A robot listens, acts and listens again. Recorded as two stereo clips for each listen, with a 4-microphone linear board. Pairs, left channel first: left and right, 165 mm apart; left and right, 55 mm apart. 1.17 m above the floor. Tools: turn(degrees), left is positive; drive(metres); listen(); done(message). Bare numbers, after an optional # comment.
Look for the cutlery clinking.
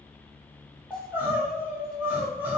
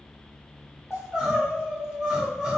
listen()
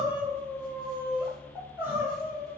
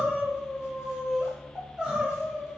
listen()
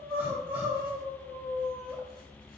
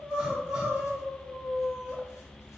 done("I can't make out cutlery clinking, only crying.")